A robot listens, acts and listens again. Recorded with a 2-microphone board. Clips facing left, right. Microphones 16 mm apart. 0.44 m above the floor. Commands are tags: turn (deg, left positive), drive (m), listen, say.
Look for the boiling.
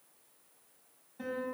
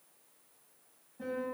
<listen/>
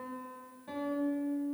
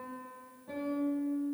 <listen/>
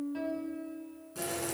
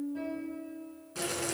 <turn deg="-30"/>
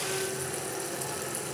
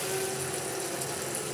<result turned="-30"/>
<say>Found it: boiling, straight ahead.</say>